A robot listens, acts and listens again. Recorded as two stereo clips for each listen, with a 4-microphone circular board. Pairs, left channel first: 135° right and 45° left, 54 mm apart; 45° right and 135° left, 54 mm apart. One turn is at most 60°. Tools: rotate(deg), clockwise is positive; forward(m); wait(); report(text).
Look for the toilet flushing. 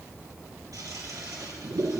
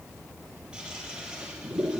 rotate(-60)
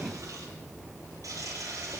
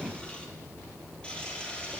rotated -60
rotate(-25)
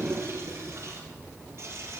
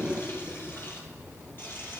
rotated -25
report("Found it: a toilet flushing, straight ahead.")